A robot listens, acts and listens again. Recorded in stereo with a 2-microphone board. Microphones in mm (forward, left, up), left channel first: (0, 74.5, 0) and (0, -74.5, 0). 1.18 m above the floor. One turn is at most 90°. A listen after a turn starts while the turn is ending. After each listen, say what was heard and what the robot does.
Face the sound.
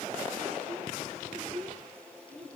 The child speaking: about 50° right or 130° right. Turn 50° right.
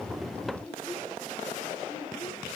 So it is at 15° right. Turn 15° right.
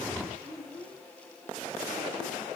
The child speaking is now 10° right. Turn 10° right.
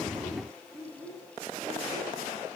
Facing the child speaking.